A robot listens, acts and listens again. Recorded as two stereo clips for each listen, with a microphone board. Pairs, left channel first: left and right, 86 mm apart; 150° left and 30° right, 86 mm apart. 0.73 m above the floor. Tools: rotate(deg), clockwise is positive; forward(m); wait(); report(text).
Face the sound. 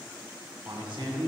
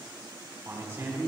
rotate(95)
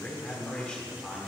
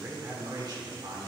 report("Facing the man speaking.")